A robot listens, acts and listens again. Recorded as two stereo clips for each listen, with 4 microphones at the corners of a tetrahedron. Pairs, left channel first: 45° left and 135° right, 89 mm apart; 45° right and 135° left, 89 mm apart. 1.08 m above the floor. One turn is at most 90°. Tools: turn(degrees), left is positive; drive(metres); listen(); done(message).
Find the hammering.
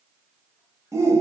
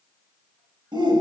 listen()
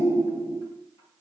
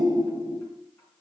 listen()
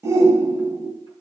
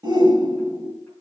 done("I can't make out hammering to turn to.")